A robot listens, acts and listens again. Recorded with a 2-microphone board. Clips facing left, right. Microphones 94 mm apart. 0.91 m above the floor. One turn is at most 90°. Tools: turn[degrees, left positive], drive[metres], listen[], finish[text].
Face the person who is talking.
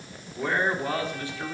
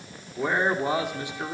Thought: The man speaking: about 20° right or 160° right.
Action: turn[-20]
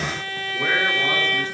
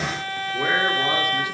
Action: listen[]
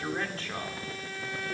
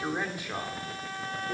Thought: The man speaking: about 20° right or 160° right.
Action: turn[-20]
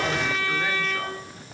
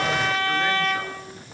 Action: listen[]
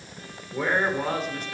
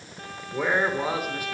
Action: turn[-30]
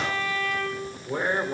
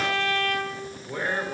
Thought: So it is at 25° left.
Action: turn[25]
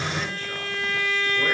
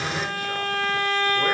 Action: listen[]
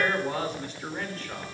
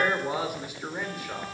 Thought: The man speaking is now 10° right.
Action: turn[-10]
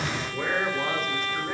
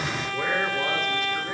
Action: listen[]
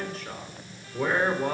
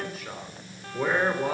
Action: finish[Facing the man speaking.]